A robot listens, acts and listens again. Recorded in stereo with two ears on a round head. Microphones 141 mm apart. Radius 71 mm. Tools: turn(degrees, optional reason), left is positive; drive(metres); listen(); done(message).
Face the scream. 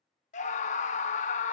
turn(degrees=50, reason="The scream: about 50° left or 130° left.")
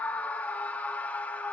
turn(degrees=10, reason="So it is at 10° left.")
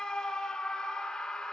done("Found it: a scream, straight ahead, under 1 m away.")